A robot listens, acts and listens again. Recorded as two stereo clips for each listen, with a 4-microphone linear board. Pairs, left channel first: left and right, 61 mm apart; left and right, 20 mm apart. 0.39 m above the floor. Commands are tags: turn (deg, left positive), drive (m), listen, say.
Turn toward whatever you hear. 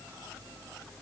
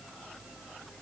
<listen/>
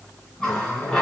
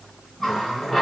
<turn deg="30"/>
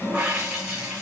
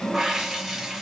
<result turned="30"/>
<turn deg="-25"/>
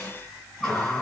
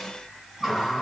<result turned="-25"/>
<say>Facing the running tap.</say>